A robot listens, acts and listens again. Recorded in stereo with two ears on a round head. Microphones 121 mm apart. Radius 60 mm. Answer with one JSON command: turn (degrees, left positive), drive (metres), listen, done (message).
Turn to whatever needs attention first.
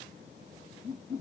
{"listen": true}
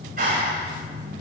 {"listen": true}
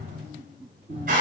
{"done": "I can't make out anything urgent, only a clap."}